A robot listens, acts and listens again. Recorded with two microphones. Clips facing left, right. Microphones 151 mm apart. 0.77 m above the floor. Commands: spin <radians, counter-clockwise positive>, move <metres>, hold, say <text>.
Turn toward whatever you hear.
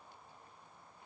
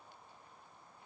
hold
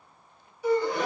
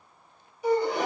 spin -0.26
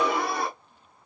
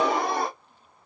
spin -2.62
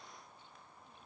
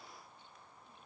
say Facing where the gasp came from. I can't hear it now.